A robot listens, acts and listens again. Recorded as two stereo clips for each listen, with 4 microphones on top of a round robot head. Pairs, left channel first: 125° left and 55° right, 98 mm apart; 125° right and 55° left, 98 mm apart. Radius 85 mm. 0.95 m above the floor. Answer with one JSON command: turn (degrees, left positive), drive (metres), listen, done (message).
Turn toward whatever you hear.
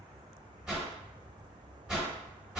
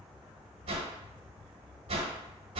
{"turn": 30}
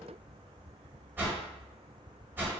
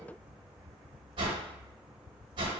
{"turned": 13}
{"turn": 15}
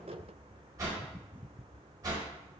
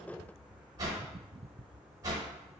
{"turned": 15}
{"done": "Facing the whoosh, 1 to 2 m away."}